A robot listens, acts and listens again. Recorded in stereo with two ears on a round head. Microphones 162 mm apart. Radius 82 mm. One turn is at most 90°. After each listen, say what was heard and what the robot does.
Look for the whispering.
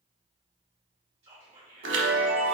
The whispering: about 35° right or 145° right. Turn 35° right.
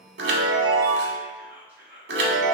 So it is at 10° right. Turn 10° right.
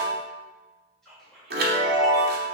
Found it: whispering, straight ahead.